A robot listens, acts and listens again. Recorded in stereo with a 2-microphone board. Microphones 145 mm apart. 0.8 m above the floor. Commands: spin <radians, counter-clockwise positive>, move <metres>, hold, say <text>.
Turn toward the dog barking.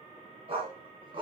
spin -0.61
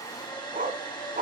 spin -2.01
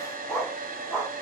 say Facing the dog barking, 2 to 4 m away.